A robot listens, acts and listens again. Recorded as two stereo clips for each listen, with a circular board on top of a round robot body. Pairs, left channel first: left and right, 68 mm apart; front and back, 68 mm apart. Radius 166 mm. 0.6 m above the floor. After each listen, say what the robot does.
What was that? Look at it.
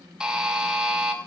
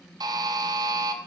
Turn 170° right.
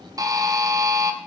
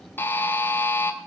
Turn 60° right.
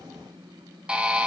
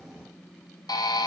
Turn 15° right.
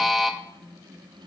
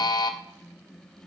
Facing the buzzer, under 1 m away.